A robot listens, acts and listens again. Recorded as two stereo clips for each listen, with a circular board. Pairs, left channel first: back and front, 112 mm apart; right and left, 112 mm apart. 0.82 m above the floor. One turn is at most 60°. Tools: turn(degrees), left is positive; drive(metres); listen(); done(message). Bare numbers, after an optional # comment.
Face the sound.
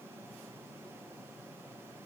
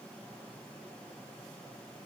listen()
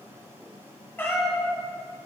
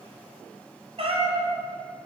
# The cat meowing: 115° left.
turn(60)
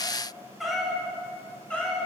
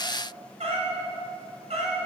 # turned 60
# The cat meowing is now 100° left.
turn(60)
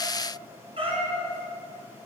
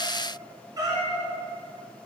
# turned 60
# The cat meowing is now 35° left.
turn(35)
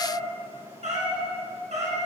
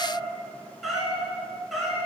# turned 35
done("Facing the cat meowing.")